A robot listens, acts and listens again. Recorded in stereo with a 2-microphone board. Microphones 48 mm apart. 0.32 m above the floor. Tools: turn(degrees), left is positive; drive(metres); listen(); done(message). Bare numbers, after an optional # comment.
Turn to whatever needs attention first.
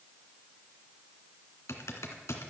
listen()
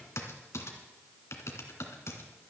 listen()
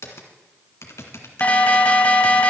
# The alarm: about 30° left or 150° left.
turn(30)
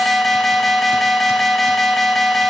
done("Found it: an alarm, straight ahead.")